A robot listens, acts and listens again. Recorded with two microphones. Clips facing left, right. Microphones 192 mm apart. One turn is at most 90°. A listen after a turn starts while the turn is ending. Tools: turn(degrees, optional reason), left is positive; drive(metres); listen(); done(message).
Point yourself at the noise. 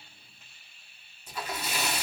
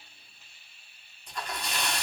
turn(degrees=30)
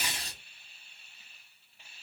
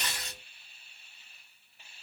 turn(degrees=90, reason="So it is at 145° left.")
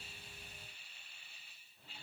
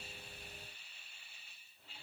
turn(degrees=55, reason="Nothing new. It was at 55° left.")
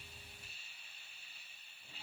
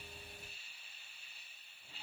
done("Facing where the splash came from. I can't hear it now.")